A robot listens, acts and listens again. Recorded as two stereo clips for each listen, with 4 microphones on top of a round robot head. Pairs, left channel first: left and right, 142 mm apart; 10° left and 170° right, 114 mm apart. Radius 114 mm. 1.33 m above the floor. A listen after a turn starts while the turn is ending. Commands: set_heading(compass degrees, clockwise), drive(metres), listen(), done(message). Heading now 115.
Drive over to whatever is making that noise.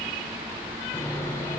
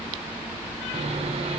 set_heading(310)
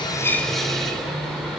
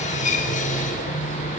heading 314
drive(1.0)
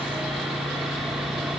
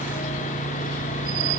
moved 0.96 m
drive(1.0)
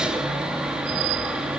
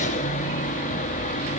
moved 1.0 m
drive(1.0)
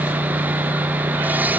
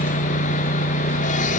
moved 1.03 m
set_heading(324)
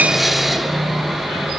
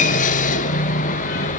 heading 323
drive(1.0)
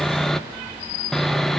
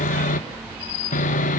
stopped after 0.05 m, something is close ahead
done("I am next to the sawing.")